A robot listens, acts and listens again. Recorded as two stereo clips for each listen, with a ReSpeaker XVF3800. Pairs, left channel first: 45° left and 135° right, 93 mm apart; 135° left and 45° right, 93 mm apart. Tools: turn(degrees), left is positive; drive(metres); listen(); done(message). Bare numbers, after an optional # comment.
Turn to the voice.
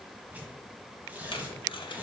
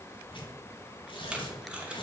listen()
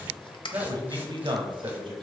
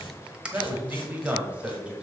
# The man speaking: 125° right.
turn(-125)
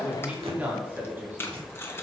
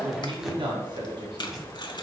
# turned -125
# The man speaking is now 70° right.
turn(-70)
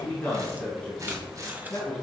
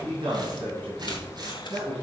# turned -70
# The man speaking is now 25° right.
turn(-25)
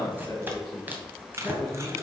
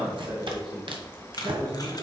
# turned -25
# The man speaking is now 10° right.
turn(-10)
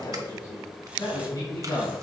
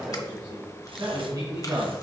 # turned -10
done("Found it: a man speaking, straight ahead.")